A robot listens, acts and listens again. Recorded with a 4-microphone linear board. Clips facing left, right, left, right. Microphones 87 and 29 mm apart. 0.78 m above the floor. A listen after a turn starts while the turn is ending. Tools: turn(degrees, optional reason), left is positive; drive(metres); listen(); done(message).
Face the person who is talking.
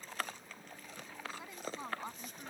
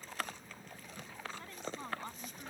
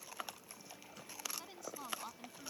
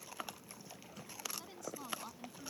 turn(degrees=30)
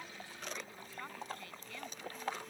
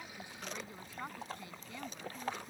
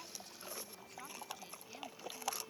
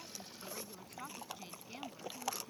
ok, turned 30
turn(degrees=-20, reason="So it is at 20° right.")
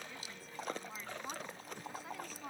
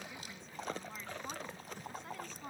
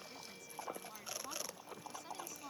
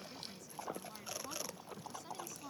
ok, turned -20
done("Found it: a woman speaking, straight ahead.")